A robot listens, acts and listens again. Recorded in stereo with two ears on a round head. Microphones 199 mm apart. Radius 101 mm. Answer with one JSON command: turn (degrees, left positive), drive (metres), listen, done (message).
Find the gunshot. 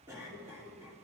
{"listen": true}
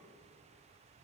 {"listen": true}
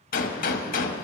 {"turn": 45}
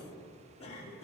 {"listen": true}
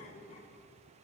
{"done": "I heard a gunshot, but can't make it out now. It was about straight ahead or 90° left."}